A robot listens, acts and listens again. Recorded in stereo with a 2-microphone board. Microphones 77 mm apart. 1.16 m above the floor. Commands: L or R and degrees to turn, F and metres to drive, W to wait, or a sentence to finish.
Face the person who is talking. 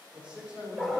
R30
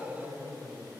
L30
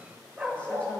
W
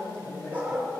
L20
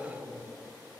Found it: a man speaking, straight ahead, over 4 m away.